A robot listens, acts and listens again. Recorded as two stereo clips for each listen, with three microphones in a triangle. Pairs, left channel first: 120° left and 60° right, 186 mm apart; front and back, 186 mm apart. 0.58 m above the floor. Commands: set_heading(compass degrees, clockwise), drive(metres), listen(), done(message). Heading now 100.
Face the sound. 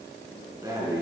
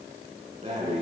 set_heading(230)
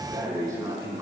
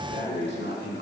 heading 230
set_heading(220)
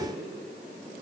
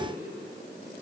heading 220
listen()
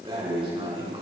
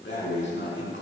done("Found it: breathing, straight ahead, over 4 m away.")